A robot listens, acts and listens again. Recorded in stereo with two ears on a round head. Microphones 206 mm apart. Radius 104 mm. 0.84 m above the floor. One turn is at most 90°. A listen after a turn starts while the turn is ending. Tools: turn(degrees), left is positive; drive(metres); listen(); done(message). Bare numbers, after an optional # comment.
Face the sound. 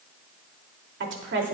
# The woman speaking: about 55° right or 125° right.
turn(-55)
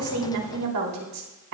# So it is at 80° right.
turn(-80)
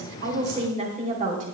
# The woman speaking is now 35° right.
turn(-35)
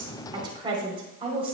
# The woman speaking is now 25° right.
turn(-25)
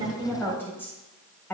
# The woman speaking is now 10° left.
turn(10)
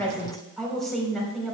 done("Facing the woman speaking, 2 to 4 m away.")